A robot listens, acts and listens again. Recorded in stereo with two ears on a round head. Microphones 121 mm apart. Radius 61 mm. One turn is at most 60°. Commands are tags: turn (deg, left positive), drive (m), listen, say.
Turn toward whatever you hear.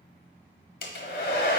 <turn deg="60"/>
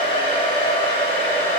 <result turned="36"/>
<turn deg="40"/>
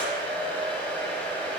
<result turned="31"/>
<turn deg="10"/>
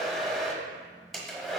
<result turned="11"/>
<say>Facing the hair dryer.</say>